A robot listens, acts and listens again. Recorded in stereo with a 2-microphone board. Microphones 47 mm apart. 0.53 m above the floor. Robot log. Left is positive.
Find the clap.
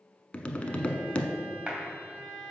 note: The clap: about 25° right or 155° right.
cmd yaw -25
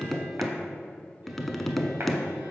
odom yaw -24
cmd idle
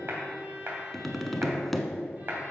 note: So it is at 130° right.
cmd yaw -130
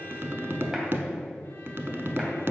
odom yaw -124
cmd idle
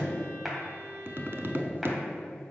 cmd idle
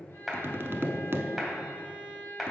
end: Found it: a clap, straight ahead.